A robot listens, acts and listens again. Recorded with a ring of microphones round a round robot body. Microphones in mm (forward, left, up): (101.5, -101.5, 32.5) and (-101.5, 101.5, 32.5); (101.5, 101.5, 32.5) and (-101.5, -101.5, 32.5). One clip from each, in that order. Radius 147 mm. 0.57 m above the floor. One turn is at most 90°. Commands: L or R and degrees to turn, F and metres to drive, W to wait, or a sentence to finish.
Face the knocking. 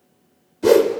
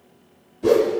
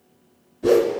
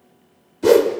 W
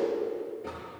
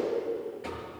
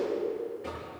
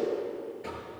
L90
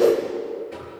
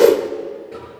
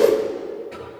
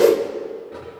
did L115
L45
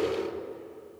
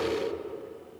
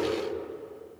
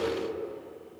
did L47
W
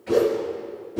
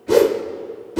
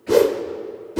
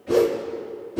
I heard knocking from this way, but can't make it out now.